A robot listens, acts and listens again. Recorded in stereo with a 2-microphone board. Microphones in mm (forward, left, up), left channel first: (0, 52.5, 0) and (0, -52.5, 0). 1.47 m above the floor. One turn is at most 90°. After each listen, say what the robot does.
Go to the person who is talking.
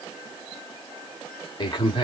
Turn 45° left.
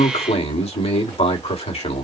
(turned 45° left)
Turn 85° left.
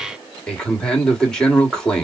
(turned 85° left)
Turn 10° left.
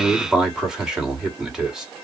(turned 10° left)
Drive 1.0 m forward.
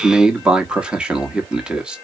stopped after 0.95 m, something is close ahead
Turn 10° right.
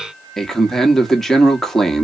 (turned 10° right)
Arrived at the man speaking, straight ahead.